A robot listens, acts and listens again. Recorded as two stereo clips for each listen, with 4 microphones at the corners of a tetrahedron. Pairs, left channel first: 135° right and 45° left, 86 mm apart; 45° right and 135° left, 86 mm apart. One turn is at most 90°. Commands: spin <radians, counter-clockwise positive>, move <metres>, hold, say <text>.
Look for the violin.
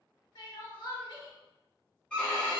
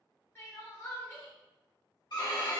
spin -1.05
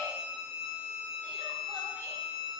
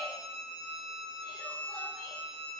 say Found it: a violin, straight ahead, 1 to 2 m away.